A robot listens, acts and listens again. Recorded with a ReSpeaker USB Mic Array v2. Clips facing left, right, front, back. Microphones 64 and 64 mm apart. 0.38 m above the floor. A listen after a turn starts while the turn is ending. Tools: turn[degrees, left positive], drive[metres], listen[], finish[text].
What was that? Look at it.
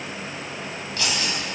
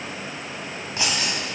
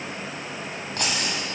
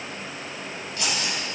Thought: The keys jangling: 25° right.
Action: turn[-25]
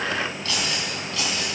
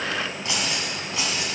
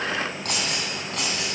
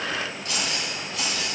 Thought: The keys jangling is now 20° right.
Action: turn[-20]
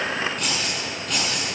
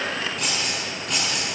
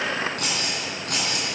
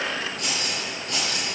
Action: finish[Found it: keys jangling, straight ahead, 2 to 4 m away.]